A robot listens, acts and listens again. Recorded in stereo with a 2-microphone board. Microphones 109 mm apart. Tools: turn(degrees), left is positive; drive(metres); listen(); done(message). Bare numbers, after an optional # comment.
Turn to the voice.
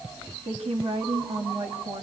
# The woman speaking: about 60° right or 120° right.
turn(-60)
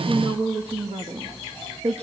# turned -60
# So it is at 75° right.
turn(-75)
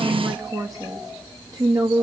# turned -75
# The woman speaking is now 45° right.
turn(-45)
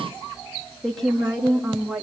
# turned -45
done("Facing the woman speaking.")